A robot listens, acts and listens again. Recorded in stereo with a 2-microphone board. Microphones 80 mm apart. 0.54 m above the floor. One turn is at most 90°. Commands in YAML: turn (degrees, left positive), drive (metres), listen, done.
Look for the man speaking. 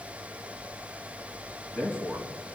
turn: 25
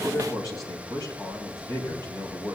turn: 90
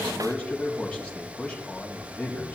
turn: 15
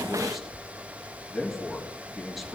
done: "Facing the man speaking."